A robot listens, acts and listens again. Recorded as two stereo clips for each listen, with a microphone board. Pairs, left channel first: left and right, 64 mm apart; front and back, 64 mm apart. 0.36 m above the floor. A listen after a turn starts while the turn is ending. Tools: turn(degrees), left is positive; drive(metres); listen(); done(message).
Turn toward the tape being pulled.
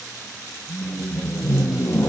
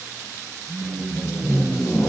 turn(degrees=45)
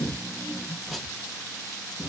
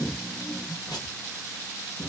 done("Facing the tape being pulled, under 1 m away.")